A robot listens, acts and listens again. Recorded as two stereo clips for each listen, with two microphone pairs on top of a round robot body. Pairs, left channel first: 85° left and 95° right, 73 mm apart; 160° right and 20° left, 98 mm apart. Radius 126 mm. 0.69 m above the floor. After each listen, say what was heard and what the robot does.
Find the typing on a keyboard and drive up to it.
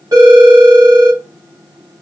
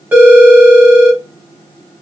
Keep listening.
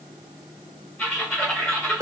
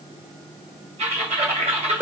The typing on a keyboard: 10° left. Turn 10° left.
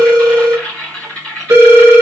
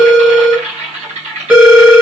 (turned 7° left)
Drive 1.0 m forward.
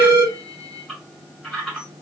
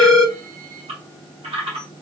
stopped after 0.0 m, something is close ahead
The typing on a keyboard is now 10° right. Turn 10° right.
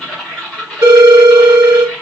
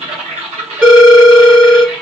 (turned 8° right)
Blocked. The typing on a keyboard is further on, straight ahead.